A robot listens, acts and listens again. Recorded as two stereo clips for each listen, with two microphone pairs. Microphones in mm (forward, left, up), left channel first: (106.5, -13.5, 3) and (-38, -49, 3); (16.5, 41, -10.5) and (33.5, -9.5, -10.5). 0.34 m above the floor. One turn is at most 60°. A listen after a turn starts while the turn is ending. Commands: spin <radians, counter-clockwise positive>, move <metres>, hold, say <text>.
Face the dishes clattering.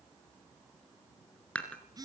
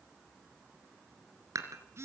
spin -1.05
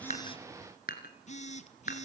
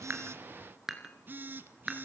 spin 0.17
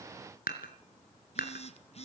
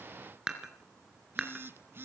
say Found it: dishes clattering, straight ahead.